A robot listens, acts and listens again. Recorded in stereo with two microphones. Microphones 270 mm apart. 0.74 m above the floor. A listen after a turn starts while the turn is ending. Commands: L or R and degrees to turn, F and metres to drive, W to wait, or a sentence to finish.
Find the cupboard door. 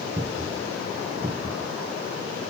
R35
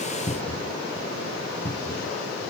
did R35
Found it: a cupboard door, straight ahead.